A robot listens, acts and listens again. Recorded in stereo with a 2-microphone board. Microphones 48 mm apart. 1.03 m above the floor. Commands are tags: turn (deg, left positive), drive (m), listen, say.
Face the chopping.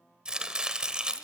<turn deg="-20"/>
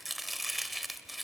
<say>Found it: chopping, straight ahead.</say>